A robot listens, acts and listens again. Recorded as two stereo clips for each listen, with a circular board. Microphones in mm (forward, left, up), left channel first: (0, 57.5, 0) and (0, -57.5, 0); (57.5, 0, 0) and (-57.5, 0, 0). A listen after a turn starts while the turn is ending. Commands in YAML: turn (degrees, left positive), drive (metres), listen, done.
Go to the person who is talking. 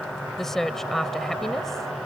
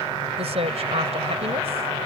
turn: 175
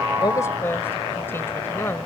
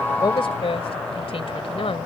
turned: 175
turn: 25
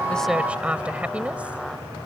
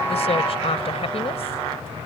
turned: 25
turn: -10
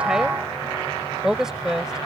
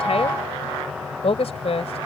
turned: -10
drive: 1.0
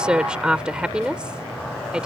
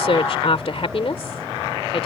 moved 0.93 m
turn: -10
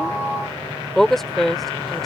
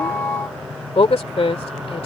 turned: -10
drive: 1.0
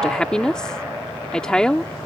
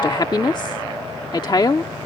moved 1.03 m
turn: 10
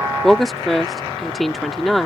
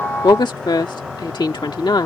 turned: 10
drive: 1.0
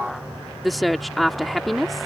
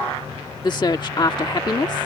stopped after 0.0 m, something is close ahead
done: "Arrived at the woman speaking, straight ahead."